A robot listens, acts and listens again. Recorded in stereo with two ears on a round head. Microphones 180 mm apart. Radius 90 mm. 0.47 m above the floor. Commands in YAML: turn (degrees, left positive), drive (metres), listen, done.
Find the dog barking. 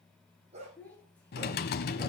turn: -35
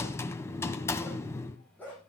turn: 10
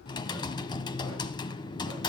listen: true
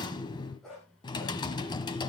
done: "Found it: a dog barking, straight ahead, over 4 m away."